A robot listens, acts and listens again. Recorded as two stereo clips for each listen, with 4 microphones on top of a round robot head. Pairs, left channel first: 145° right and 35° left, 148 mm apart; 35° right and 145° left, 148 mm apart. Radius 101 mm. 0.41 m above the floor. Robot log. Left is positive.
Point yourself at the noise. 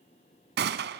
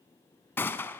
note: The gunshot: 45° left.
cmd yaw +45
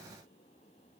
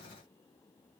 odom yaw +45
end: Facing where the gunshot came from. I can't hear it now.